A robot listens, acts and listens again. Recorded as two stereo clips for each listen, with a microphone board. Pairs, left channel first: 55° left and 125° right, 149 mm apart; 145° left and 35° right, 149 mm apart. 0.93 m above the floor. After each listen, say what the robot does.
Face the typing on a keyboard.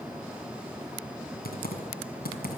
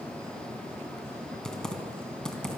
Turn 60° left.
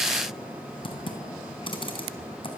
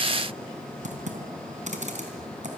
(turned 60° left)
Found it: typing on a keyboard, straight ahead.